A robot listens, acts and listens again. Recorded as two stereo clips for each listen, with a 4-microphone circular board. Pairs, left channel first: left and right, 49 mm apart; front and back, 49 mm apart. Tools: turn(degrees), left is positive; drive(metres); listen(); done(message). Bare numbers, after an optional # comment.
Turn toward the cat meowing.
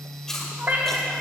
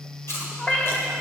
# The cat meowing: 50° right.
turn(-50)
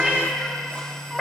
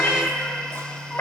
# The cat meowing is now 10° left.
turn(10)
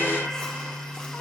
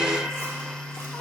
# The cat meowing is now 35° left.
turn(35)
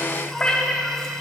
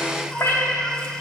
# The cat meowing is now 30° left.
turn(30)
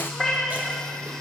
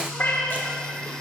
done("Found it: a cat meowing, straight ahead.")